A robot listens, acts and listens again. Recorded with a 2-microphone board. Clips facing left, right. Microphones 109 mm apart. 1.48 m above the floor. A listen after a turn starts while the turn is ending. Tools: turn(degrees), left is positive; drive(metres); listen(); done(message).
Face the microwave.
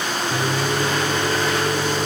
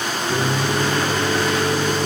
turn(degrees=-90)
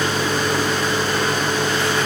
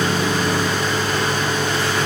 turn(degrees=10)
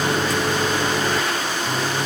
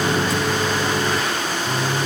done("Found it: a microwave, straight ahead.")